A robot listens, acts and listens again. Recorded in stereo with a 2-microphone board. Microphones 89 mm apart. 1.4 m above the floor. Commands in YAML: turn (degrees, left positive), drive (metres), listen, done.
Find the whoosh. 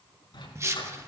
turn: -30
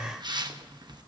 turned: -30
turn: -120
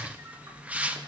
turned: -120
turn: -15
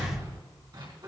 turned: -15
listen: true
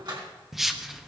done: "Facing the whoosh."